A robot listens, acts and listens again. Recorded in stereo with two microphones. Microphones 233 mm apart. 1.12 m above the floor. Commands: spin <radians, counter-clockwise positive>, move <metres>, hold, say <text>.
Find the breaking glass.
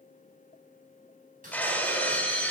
spin 0.52
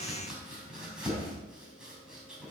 hold
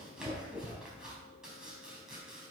say I heard breaking glass, but can't make it out now. It was about 25° right or 145° left.